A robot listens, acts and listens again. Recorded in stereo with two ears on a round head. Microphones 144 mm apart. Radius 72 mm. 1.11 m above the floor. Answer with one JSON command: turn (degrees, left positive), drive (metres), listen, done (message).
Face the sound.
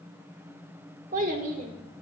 {"turn": -55}
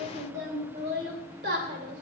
{"turn": -65}
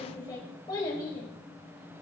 {"turn": 25}
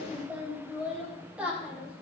{"turn": -10}
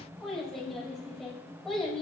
{"done": "Found it: a child speaking, straight ahead."}